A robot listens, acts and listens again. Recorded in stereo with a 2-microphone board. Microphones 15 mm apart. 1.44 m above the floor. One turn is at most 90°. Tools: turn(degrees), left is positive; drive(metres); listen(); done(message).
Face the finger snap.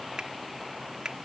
turn(degrees=-65)
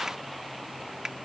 turn(degrees=-50)
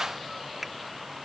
turn(degrees=-15)
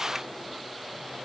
listen()
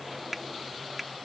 done("Found it: a finger snap, straight ahead.")